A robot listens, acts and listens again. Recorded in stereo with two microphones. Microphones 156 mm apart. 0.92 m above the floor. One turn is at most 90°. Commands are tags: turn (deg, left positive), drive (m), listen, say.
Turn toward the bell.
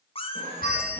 <turn deg="70"/>
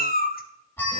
<turn deg="15"/>
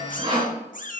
<listen/>
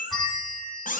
<say>Found it: a bell, straight ahead, 2 to 4 m away.</say>